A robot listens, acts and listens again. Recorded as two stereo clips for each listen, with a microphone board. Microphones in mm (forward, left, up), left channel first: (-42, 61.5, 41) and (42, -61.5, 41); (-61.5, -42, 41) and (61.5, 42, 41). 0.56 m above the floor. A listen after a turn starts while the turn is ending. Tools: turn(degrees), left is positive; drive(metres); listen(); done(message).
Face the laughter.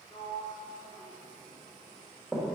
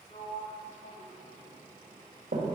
listen()
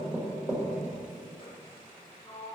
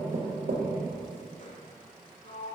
listen()
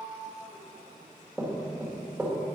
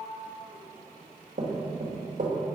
done("I can't make out laughter, only a sliding door and knocking.")